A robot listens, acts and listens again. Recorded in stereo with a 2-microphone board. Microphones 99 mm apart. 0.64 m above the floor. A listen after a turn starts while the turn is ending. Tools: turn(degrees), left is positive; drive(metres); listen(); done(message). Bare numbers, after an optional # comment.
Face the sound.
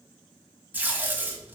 # The tape being pulled: about 20° right or 160° right.
turn(-20)
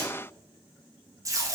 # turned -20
# So it is at 145° right.
turn(-145)
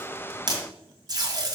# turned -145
# The tape being pulled is now 40° right.
turn(-40)
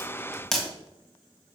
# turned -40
done("Found it: tape being pulled, straight ahead.")